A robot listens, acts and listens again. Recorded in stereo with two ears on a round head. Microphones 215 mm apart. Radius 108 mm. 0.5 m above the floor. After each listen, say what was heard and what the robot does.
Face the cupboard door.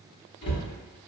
The cupboard door: about 25° left or 155° left. Turn 25° left.
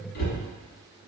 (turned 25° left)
So it is at 130° left. Turn 130° left.
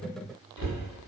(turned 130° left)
The cupboard door is now 70° left. Turn 70° left.
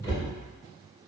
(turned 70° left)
The cupboard door is now 15° left. Turn 15° left.
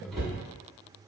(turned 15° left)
Found it: a cupboard door, straight ahead.